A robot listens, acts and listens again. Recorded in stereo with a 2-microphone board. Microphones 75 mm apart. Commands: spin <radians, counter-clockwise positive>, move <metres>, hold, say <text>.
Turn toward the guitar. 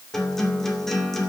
spin 0.52
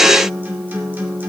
spin -0.44
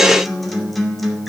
say Facing the guitar, 2 to 4 m away.